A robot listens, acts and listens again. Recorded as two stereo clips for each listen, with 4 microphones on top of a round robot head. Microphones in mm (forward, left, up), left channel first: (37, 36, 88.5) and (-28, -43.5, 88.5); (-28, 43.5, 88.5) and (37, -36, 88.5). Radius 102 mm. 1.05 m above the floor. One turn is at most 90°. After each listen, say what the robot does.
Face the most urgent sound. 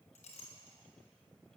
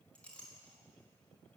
Keep listening.
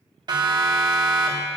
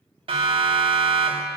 Turn 85° right.
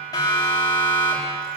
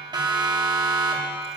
Found it: a siren, straight ahead.